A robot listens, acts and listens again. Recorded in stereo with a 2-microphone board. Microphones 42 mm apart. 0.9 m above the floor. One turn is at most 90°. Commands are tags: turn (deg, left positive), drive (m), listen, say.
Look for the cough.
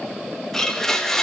<listen/>
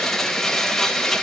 <listen/>
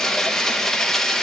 <say>I can't make out a cough, only a blender.</say>